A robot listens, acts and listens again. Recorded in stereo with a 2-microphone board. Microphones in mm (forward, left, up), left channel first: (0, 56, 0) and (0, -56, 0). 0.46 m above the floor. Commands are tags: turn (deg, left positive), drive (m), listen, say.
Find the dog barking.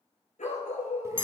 <turn deg="75"/>
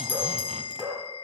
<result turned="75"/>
<turn deg="-20"/>
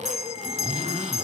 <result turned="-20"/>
<listen/>
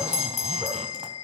<listen/>
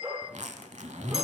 <turn deg="-15"/>
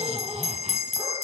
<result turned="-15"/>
<listen/>
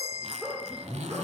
<say>Facing the dog barking, over 4 m away.</say>